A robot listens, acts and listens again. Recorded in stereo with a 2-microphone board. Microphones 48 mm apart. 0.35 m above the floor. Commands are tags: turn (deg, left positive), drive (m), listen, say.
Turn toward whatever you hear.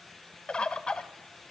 <turn deg="20"/>
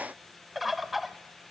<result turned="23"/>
<say>Found it: a bird, straight ahead.</say>